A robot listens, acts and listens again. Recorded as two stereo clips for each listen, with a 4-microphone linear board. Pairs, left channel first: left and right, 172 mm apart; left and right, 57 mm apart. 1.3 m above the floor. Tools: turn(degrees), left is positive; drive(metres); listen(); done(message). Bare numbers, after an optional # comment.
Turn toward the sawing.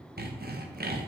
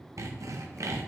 # The sawing: about 65° right or 115° right.
turn(-65)
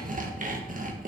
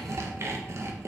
# So it is at 50° right.
turn(-50)
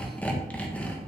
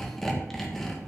# The sawing is now 10° left.
turn(10)
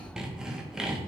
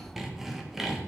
done("Found it: sawing, straight ahead.")